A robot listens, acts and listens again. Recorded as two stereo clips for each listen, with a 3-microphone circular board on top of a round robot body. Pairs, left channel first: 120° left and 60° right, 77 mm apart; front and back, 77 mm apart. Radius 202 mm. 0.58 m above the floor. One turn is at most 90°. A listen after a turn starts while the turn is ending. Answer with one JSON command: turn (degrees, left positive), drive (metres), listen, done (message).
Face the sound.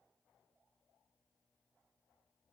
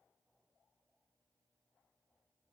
{"listen": true}
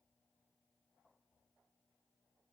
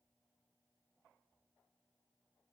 {"listen": true}
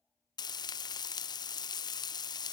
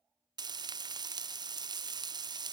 {"turn": 90}
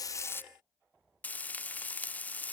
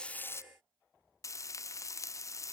{"turn": 50}
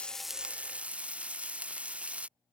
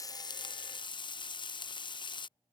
{"turn": 15}
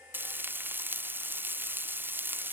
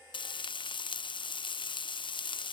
{"done": "Facing the frying."}